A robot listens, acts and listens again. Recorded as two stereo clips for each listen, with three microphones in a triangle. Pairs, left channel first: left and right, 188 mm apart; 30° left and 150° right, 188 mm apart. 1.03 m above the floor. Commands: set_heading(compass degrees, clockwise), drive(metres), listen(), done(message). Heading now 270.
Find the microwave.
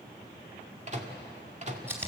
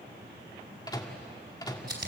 set_heading(310)
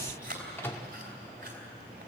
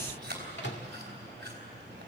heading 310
set_heading(295)
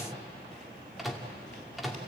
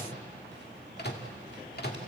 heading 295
done("Found it: a microwave, straight ahead.")